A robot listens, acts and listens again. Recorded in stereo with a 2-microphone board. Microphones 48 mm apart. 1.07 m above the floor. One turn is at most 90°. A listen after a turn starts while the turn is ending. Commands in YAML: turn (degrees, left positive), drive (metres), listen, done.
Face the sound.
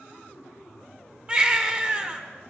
turn: -25
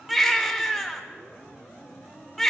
done: "Facing the baby crying."